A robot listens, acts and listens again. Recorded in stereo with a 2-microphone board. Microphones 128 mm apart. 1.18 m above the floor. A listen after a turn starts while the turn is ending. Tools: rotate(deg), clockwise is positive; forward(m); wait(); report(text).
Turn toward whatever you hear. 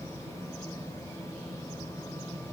wait()
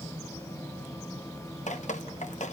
rotate(-70)
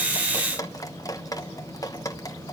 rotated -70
rotate(-30)
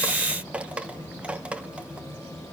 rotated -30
rotate(10)
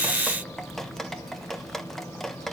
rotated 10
report("Facing the dripping.")